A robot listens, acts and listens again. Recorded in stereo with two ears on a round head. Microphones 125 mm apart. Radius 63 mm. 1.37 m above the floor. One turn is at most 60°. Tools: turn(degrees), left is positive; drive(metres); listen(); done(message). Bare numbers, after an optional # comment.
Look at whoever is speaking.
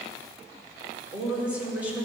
turn(-30)
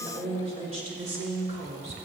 # So it is at 130° right.
turn(-60)
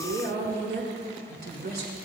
# The woman speaking is now 65° right.
turn(-60)
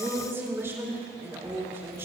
# The woman speaking is now 15° right.
turn(-15)
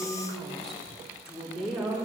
done("Found it: a woman speaking, straight ahead.")